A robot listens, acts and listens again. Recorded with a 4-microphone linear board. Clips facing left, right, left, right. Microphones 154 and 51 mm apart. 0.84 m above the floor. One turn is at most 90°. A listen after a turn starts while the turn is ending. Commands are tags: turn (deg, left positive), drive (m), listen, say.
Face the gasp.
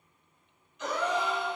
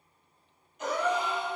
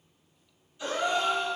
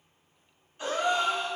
<turn deg="-45"/>
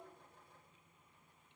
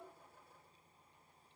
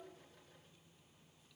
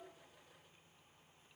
<listen/>
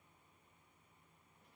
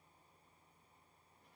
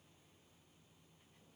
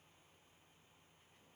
<say>I heard a gasp, but can't make it out now. It was about straight ahead or 90° right.</say>